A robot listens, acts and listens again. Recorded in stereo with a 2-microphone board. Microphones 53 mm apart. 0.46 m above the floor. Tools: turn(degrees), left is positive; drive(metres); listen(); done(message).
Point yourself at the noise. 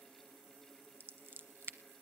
turn(degrees=-50)
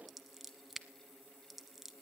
done("Facing the scissors, under 1 m away.")